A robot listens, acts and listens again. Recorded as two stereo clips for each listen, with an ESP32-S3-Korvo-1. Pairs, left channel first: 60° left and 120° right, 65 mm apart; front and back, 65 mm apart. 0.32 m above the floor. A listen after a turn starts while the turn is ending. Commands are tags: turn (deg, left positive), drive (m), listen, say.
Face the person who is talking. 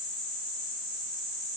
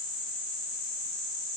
<listen/>
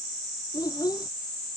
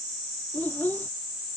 <turn deg="65"/>
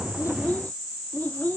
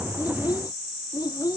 <say>Found it: a child speaking, straight ahead.</say>